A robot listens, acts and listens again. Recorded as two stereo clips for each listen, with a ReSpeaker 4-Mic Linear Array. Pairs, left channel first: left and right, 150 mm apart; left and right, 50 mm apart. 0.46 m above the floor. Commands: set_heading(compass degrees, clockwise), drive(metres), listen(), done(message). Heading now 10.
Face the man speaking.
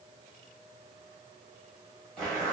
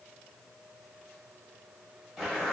listen()
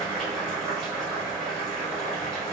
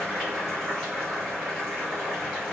listen()
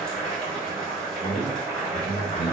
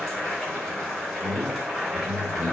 set_heading(40)
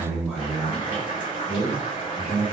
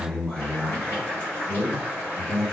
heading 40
done("Found it: a man speaking, straight ahead, 1 to 2 m away.")